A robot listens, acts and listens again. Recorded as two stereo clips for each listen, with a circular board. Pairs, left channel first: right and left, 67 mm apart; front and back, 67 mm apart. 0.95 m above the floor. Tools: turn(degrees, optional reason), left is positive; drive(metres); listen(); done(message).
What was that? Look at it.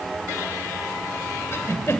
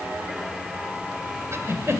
turn(degrees=-135, reason="The giggle: 135° right.")
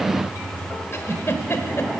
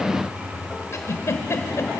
turn(degrees=-45, reason="The giggle is now 45° right.")
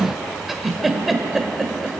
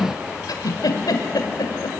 done("Found it: a giggle, straight ahead.")